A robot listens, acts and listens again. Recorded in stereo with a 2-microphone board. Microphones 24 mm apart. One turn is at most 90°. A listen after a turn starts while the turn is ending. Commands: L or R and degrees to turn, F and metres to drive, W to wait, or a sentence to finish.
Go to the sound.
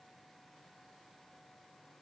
W
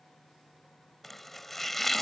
L30
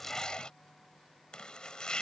L90
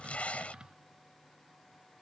L50
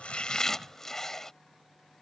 L20
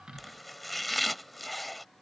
F1.0
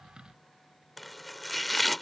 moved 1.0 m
F1.0
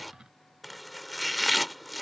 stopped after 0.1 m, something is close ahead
I am next to the chopping.